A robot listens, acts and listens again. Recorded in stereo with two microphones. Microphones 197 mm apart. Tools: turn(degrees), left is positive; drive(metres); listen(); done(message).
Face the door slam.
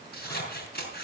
listen()
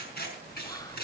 listen()
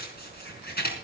done("I can't make out a door slam to turn to.")